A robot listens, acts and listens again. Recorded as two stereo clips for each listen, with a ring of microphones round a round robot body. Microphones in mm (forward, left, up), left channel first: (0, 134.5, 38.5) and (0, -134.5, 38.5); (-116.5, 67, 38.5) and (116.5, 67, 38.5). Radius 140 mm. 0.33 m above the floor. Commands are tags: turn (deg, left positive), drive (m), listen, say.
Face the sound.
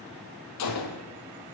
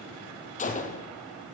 <turn deg="120"/>
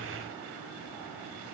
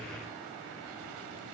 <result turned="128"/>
<say>I heard a gunshot from this way, but can't make it out now.</say>